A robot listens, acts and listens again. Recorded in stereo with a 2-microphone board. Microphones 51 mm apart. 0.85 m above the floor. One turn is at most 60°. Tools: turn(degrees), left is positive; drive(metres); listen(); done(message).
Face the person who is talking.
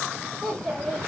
turn(degrees=30)
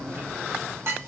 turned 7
listen()
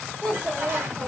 turn(degrees=30)
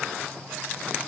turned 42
listen()
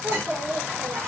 turn(degrees=-35)
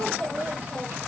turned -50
turn(degrees=15)
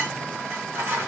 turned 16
listen()
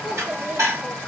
done("Found it: a child speaking, straight ahead.")